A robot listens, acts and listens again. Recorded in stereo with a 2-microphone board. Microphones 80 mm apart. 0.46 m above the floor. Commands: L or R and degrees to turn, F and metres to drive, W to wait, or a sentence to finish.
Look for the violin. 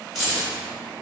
W
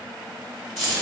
W
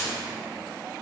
I can't make out a violin, only keys jangling.